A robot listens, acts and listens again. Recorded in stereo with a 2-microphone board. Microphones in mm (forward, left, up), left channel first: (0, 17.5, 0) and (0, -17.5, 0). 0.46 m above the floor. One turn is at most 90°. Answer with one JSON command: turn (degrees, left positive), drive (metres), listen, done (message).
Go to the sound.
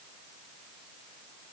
{"listen": true}
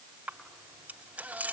{"turn": -40}
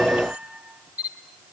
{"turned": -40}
{"turn": -90}
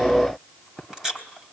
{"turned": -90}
{"turn": -15}
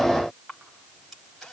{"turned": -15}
{"listen": true}
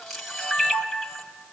{"drive": 1.0}
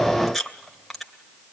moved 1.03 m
{"drive": 1.0}
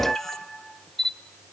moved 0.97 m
{"drive": 1.0}
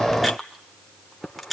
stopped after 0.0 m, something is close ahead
{"done": "I am next to the camera shutter."}